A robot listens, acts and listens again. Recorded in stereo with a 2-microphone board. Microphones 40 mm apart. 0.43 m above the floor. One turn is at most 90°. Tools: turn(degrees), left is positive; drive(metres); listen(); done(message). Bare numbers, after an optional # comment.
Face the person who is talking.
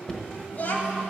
# The child speaking: about 40° left or 140° left.
turn(40)
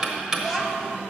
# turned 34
done("Facing the child speaking, 1 to 2 m away.")